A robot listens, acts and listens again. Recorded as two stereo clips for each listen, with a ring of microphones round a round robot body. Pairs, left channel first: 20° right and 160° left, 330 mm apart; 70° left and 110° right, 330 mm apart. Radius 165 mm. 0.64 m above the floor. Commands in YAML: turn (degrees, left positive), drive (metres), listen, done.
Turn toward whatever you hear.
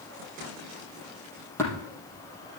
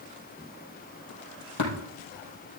turn: 60
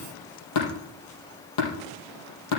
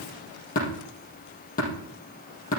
done: "Found it: tapping, straight ahead."